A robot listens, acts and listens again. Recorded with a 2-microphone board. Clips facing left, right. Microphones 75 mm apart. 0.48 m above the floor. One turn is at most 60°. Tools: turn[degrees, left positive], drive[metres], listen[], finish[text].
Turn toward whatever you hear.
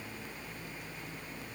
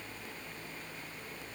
Action: listen[]
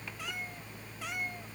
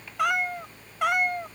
Thought: The cat meowing: about 70° right or 110° right.
Action: turn[-60]
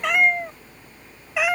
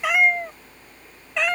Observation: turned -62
Thought: So it is at 10° left.
Action: turn[10]
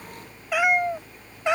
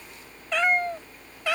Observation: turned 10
Thought: The cat meowing is now 25° left.
Action: turn[25]
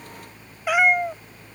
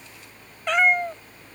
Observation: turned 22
Thought: The cat meowing is now 10° left.
Action: turn[10]
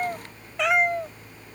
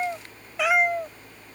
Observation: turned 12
Action: finish[Found it: a cat meowing, straight ahead.]